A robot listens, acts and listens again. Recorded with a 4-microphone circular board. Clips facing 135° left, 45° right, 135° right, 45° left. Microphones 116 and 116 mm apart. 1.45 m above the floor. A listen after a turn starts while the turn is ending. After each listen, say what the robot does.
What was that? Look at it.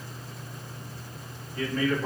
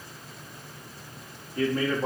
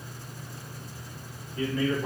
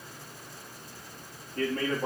Found it: a man speaking, straight ahead.